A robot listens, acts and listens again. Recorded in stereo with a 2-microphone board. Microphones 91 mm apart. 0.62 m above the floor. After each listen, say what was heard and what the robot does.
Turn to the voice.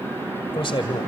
The man speaking: about 70° left or 110° left. Turn 70° left.
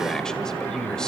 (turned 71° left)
Found it: a man speaking, straight ahead.